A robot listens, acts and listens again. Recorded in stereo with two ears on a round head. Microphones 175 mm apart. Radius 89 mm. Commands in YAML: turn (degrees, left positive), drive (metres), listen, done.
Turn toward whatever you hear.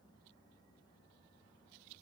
listen: true
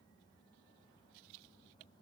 listen: true
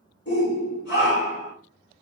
turn: 60
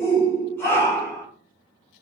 turn: 15
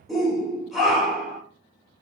done: "Found it: a shout, straight ahead, 1 to 2 m away."